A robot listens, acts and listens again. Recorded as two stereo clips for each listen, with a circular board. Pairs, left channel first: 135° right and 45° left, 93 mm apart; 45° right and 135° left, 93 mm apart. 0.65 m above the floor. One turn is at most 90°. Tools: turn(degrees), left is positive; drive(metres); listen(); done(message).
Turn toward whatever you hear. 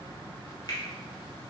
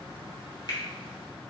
turn(degrees=-90)
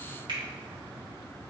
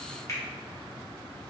listen()
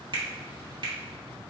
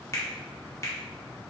turn(degrees=15)
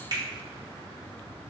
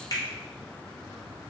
done("Facing the finger snap.")